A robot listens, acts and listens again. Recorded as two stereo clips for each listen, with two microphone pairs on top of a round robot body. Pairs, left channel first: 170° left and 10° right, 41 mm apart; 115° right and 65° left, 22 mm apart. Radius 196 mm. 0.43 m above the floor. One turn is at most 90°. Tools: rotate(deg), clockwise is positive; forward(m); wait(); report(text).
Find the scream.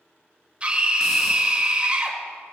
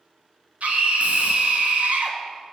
rotate(-50)
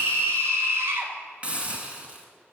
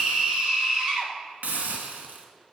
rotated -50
rotate(-10)
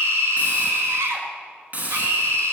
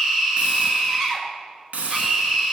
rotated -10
report("Found it: a scream, straight ahead, 2 to 4 m away.")